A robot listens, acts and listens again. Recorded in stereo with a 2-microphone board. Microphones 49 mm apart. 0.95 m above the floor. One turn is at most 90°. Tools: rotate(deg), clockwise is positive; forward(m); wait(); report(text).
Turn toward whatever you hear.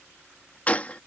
rotate(-30)
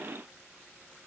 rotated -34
wait()
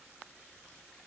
report("I heard a gunshot, but can't make it out now. It was about 5° right or 115° left.")